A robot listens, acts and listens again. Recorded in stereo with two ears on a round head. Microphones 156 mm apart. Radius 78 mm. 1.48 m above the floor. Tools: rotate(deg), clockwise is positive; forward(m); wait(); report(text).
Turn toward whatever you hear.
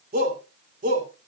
rotate(55)
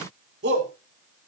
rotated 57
rotate(65)
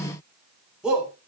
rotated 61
report("Found it: a shout, straight ahead, over 4 m away.")